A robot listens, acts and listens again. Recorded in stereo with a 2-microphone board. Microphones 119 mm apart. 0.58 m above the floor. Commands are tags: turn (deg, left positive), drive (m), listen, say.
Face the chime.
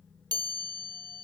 <turn deg="-35"/>
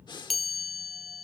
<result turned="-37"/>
<say>Found it: a chime, straight ahead.</say>